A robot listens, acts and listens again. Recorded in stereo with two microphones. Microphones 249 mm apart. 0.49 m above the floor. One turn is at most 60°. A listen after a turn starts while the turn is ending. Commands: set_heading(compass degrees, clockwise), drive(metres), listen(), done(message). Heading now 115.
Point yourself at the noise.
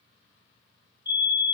set_heading(75)
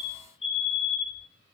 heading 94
set_heading(74)
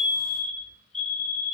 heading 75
done("Found it: a fire alarm, straight ahead, over 4 m away.")